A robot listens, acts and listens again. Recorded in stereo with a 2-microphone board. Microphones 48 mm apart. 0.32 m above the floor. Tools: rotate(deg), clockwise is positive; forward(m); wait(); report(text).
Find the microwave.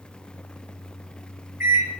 rotate(60)
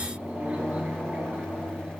rotate(40)
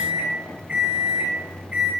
rotate(30)
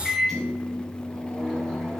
report("Found it: a microwave, straight ahead, 1 to 2 m away.")